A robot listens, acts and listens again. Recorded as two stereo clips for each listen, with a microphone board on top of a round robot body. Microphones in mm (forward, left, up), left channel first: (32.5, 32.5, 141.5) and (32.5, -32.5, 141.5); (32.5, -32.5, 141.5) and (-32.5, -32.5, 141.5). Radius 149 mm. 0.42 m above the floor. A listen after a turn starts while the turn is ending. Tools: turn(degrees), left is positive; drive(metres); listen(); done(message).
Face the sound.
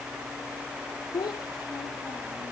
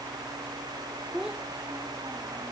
turn(degrees=100)
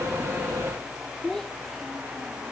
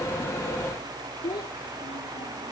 done("Found it: a child speaking, straight ahead.")